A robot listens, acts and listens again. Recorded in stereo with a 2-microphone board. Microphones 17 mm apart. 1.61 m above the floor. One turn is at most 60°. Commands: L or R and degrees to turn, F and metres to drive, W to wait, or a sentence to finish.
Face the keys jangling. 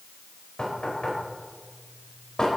W
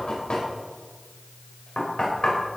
W
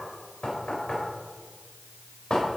I can't make out keys jangling, only knocking.